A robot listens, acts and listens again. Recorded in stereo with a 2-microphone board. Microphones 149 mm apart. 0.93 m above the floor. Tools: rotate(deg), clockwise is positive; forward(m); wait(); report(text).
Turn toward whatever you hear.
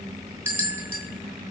rotate(30)
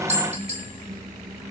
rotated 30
rotate(135)
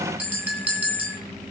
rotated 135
rotate(10)
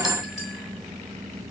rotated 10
report("Facing the bell, 2 to 4 m away.")